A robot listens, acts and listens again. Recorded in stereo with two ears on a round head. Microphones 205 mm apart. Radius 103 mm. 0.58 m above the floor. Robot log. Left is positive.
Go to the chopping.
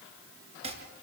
note: The chopping: about 30° right or 150° right.
cmd yaw -30
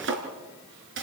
note: So it is at 120° right.
cmd yaw -120
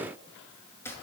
note: The chopping is now 10° left.
cmd yaw +10
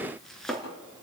cmd fwd 1.0
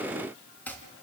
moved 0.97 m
note: The chopping is now 10° left.
cmd yaw +10
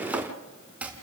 cmd fwd 1.0
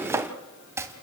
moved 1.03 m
note: The chopping is now 10° right.
cmd yaw -10
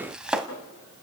cmd fwd 1.0
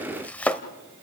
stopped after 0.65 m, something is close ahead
end: I am next to the chopping.